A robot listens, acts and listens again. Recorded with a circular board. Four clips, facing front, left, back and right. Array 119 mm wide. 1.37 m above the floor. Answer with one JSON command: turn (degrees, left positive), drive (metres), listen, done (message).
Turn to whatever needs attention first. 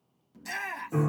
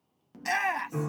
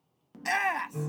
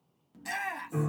{"turn": 145}
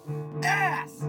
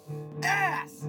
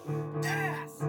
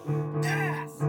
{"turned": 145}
{"turn": 35}
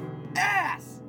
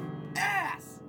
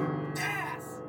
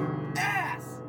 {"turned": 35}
{"done": "Facing the shout, under 1 m away."}